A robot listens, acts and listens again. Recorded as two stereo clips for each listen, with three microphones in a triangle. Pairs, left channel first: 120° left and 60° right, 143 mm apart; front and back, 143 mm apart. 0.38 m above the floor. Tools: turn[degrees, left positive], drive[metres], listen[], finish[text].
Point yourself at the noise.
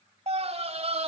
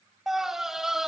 Thought: The scream: 95° right.
Action: turn[-95]
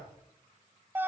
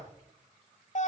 Thought: The scream is now 15° left.
Action: turn[15]
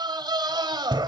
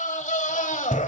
Action: finish[Found it: a scream, straight ahead.]